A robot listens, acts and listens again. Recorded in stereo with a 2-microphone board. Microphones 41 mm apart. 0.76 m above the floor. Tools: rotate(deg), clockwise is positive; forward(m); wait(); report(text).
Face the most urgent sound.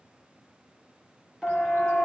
rotate(30)
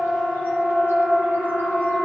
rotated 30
rotate(135)
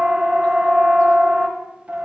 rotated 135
rotate(40)
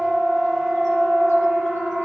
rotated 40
rotate(-10)
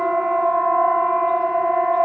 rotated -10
report("Found it: a siren, straight ahead, over 4 m away.")